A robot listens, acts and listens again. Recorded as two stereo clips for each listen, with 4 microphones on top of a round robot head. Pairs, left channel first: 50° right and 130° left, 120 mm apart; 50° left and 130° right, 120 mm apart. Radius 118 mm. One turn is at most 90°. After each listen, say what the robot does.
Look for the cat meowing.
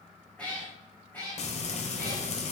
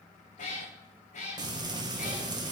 Turn 25° left.
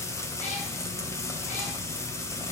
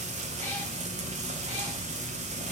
Keep listening.
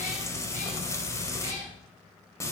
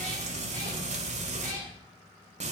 Turn 30° right.
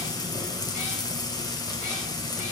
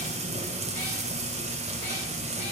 Keep listening.
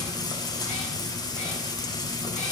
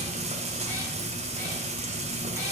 Keep listening.
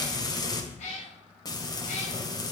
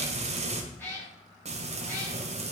Turn 20° right.
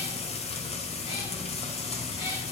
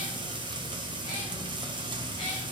Keep listening.
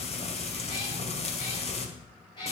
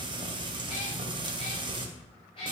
Found it: a cat meowing, straight ahead, over 4 m away.